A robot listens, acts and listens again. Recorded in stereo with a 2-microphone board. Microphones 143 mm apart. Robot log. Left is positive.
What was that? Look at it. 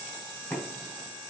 note: The knocking: about 20° left or 160° left.
cmd yaw +20
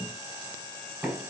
end: Facing the knocking, 1 to 2 m away.